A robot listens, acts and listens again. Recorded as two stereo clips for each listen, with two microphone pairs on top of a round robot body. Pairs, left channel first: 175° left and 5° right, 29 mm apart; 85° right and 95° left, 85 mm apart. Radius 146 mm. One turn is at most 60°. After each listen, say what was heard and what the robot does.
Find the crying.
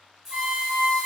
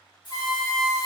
Keep listening.
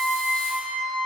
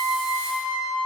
Keep listening.
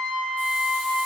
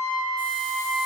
I can't make out crying to turn to.